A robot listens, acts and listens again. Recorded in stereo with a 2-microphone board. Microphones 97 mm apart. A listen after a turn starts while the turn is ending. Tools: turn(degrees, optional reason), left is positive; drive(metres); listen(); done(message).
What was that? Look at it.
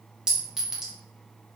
turn(degrees=-30)
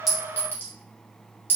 turn(degrees=25, reason="So it is at 25° left.")
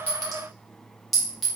done("Found it: a clink, straight ahead, under 1 m away.")